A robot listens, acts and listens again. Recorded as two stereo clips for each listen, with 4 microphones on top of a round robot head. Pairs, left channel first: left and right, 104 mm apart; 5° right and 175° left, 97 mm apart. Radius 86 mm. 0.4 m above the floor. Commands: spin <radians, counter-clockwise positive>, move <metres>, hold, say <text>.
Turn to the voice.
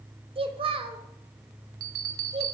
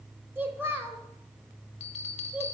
spin -2.01
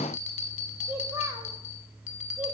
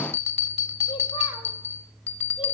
hold
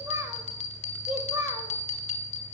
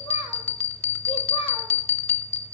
spin -0.52
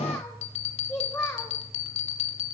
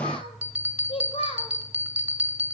spin 0.17
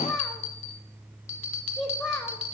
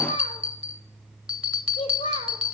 say Facing the child speaking.